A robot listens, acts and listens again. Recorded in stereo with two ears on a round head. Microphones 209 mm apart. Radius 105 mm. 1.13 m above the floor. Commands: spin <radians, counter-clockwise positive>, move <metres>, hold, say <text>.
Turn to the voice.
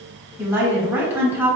spin -0.52
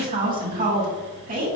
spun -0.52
spin -2.44
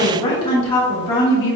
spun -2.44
spin 0.44
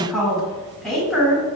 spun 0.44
say Found it: a woman speaking, straight ahead.